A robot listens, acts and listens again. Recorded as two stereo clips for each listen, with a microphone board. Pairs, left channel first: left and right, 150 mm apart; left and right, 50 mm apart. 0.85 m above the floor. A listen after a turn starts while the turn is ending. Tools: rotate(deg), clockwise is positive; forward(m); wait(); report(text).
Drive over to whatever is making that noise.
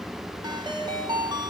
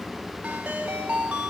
rotate(30)
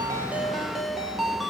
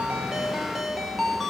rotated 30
forward(1.0)
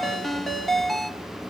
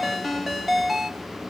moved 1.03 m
forward(1.0)
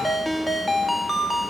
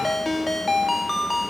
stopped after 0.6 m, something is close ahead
report("I am next to the ringtone.")